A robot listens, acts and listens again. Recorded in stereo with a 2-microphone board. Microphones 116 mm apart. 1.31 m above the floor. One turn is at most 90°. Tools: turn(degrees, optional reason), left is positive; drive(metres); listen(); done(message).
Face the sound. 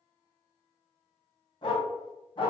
turn(degrees=45, reason="The dog barking: about 45° left or 135° left.")
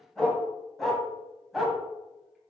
done("Facing the dog barking.")